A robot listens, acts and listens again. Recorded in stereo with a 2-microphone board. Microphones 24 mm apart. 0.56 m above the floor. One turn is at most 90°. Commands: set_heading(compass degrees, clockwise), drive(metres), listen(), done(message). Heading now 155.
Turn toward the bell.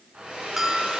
set_heading(185)
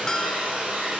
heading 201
listen()
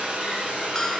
listen()
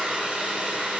done("I heard a bell, but can't make it out now. It was about 35° left or 120° right.")